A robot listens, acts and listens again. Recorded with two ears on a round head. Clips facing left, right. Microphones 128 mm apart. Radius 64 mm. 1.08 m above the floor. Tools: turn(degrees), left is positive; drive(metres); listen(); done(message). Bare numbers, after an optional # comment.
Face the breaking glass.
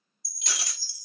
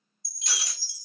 # The breaking glass: about 55° left or 125° left.
turn(55)
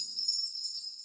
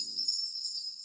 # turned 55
listen()
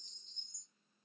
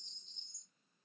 done("I heard breaking glass, but can't make it out now. It was about straight ahead or 70° left.")